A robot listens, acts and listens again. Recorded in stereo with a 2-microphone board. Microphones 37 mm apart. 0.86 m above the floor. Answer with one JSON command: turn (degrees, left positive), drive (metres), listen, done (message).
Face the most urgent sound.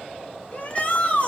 {"turn": 35}
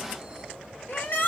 {"turn": 105}
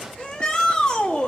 {"turn": 20}
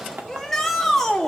{"turn": 10}
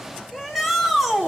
{"done": "Found it: a shout, straight ahead."}